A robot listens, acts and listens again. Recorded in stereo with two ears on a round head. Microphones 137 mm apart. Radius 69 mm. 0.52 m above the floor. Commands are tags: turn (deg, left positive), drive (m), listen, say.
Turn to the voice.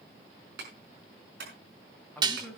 <turn deg="30"/>
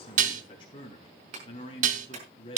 <turn deg="145"/>
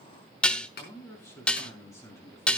<turn deg="20"/>
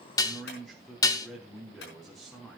<say>Facing the man speaking, 2 to 4 m away.</say>